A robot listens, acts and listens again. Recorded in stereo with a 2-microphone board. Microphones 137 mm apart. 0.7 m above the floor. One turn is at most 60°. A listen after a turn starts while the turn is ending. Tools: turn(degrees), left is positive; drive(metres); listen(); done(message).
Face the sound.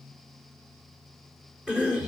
turn(degrees=-30)
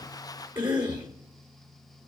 turn(degrees=-60)
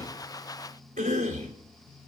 turn(degrees=-60)
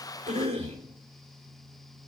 turn(degrees=-45)
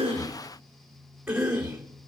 done("Facing the cough.")